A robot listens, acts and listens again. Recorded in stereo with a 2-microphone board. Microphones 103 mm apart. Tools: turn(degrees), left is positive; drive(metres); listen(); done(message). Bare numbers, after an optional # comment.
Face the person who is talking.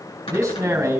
# The man speaking: about 30° right or 150° right.
turn(-30)
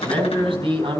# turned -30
# So it is at 120° right.
turn(-120)
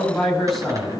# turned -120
done("Found it: a man speaking, straight ahead, over 4 m away.")